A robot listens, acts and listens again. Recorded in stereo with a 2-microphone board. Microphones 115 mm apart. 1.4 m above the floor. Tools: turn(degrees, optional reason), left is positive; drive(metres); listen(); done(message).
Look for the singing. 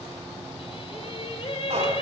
turn(degrees=60, reason="The singing: about 60° left or 120° left.")
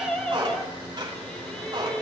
turn(degrees=10, reason="So it is at 10° left.")
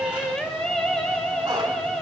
done("Found it: singing, straight ahead, 2 to 4 m away.")